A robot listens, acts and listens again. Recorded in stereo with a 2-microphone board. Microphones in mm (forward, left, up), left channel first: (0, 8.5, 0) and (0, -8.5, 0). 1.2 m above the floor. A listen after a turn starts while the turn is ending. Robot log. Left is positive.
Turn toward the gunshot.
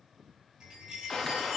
note: The gunshot: about 30° left or 150° left.
cmd yaw +30
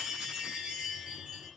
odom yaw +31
cmd idle
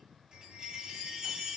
end: I heard a gunshot, but can't make it out now. It was about straight ahead or 115° left.